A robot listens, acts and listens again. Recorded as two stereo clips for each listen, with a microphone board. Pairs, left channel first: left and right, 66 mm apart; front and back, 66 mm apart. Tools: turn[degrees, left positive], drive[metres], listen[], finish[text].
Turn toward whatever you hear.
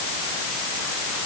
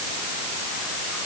Action: listen[]
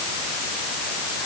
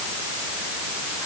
Action: listen[]
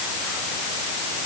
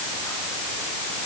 Action: finish[I can't make out anything.]